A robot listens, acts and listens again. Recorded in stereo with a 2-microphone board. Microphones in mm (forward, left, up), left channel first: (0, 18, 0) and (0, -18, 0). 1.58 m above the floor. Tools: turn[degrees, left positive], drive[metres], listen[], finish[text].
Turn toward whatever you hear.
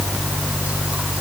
Action: listen[]
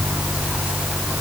Action: listen[]
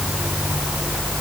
Action: finish[I can't make out anything to turn to.]